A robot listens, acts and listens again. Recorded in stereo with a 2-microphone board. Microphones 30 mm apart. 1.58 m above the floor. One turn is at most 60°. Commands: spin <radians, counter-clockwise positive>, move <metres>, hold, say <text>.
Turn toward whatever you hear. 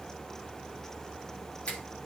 spin 0.79
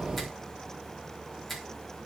say Facing the finger snap.